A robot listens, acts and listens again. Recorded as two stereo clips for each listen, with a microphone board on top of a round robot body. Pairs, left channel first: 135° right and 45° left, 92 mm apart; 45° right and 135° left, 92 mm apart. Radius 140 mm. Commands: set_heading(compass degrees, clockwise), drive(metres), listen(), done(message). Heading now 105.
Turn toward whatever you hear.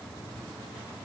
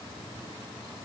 listen()
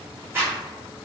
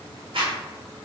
set_heading(355)
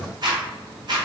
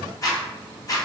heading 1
done("Facing the zipper.")